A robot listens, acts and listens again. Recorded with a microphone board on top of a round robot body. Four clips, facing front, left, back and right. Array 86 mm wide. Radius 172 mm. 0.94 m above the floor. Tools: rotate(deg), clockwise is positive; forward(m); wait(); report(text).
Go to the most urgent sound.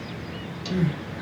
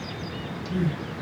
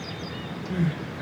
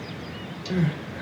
rotate(110)
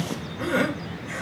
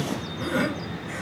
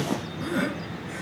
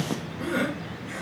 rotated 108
forward(1.0)
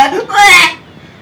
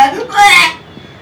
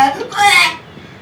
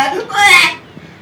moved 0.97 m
forward(1.0)
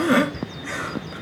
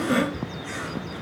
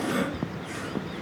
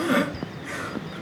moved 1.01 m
rotate(10)
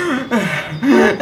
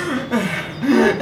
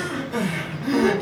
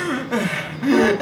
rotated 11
forward(1.0)
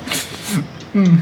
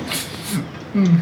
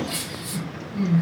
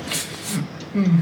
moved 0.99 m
rotate(-10)
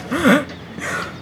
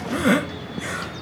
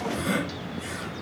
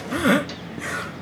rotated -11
forward(1.0)
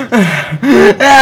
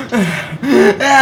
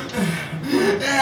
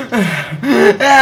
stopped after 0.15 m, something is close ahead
report("I am next to the crying.")